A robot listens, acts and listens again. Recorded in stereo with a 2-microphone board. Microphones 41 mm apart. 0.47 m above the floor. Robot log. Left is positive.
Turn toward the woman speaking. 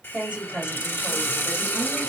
note: The woman speaking: about 20° right or 160° right.
cmd yaw -20
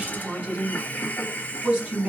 note: The woman speaking: about 25° right or 155° right.
cmd yaw -25
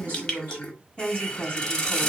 note: So it is at 135° right.
cmd yaw -135
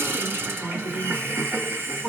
note: The woman speaking is now 35° right.
cmd yaw -35
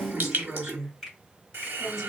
end: Found it: a woman speaking, straight ahead, 2 to 4 m away.